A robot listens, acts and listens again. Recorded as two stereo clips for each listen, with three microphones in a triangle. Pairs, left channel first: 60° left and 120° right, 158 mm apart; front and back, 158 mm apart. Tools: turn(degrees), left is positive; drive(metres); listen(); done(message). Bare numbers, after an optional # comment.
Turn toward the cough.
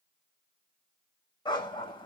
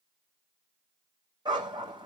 listen()
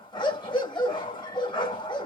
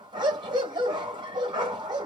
listen()
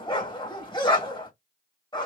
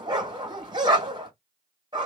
done("I can't make out a cough, only a dog barking.")